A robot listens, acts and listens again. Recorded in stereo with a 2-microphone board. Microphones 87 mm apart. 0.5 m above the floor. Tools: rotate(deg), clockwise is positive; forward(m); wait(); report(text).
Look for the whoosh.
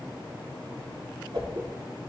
rotate(70)
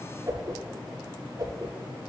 rotate(40)
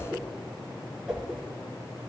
report("Found it: a whoosh, straight ahead.")